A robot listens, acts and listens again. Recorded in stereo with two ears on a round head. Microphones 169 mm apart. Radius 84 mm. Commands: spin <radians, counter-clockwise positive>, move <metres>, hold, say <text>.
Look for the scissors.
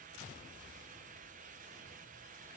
hold
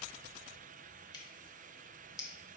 spin 0.35
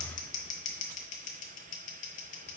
spin 2.36
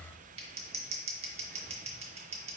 spin -0.61
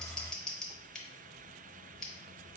say Found it: scissors, straight ahead.